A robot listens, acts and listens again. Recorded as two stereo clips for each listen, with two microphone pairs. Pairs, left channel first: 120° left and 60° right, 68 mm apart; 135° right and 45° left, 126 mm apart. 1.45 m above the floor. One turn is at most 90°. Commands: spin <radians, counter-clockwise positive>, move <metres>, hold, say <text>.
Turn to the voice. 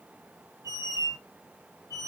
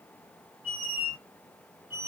hold
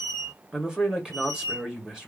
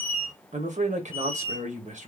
spin 0.35
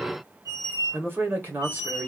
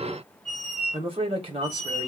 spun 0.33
say Found it: a man speaking, straight ahead.